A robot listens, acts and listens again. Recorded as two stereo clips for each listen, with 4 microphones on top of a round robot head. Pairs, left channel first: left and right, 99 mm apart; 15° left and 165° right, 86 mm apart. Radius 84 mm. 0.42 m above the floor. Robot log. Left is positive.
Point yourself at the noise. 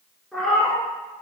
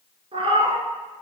note: The cat meowing: straight behind.
cmd yaw +180
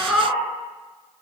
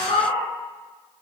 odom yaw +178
end: Facing the cat meowing.